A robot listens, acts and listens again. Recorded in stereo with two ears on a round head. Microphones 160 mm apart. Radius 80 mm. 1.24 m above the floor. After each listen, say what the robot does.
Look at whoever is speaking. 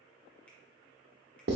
Keep listening.
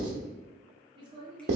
Turn 25° right.
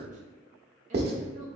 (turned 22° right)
Turn 130° right.
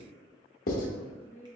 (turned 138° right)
Turn 10° left.
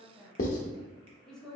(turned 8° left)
Found it: a woman speaking, straight ahead.